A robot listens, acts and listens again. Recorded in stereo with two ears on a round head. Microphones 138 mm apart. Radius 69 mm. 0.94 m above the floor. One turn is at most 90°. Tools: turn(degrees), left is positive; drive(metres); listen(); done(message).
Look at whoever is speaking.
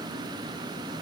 listen()
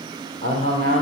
turn(degrees=50)
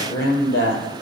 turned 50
turn(degrees=75)
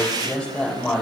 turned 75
done("Facing the man speaking, over 4 m away.")